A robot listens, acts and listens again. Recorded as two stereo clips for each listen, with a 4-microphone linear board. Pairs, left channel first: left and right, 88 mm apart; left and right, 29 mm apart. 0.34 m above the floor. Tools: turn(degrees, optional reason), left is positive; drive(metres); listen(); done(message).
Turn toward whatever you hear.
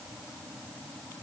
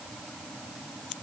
listen()
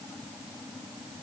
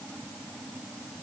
listen()
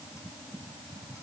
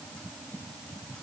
done("I can't make out anything.")